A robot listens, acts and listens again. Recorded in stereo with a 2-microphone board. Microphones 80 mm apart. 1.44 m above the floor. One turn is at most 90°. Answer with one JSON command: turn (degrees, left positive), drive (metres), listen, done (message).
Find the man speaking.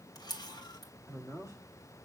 {"turn": 45}
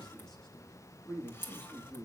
{"turn": 15}
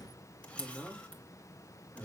{"turn": 15}
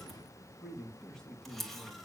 {"done": "Facing the man speaking, 2 to 4 m away."}